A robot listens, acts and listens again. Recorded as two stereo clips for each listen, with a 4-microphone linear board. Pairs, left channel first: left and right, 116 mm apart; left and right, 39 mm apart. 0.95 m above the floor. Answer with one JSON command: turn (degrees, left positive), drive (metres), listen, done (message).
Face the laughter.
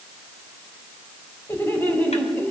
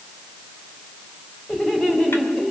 {"turn": 15}
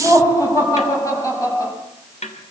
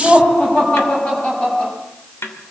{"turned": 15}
{"turn": 30}
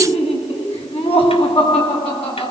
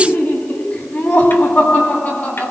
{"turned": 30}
{"turn": 125}
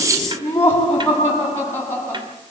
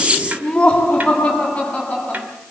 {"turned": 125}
{"turn": 20}
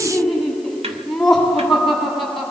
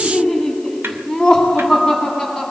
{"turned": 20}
{"done": "Facing the laughter, over 4 m away."}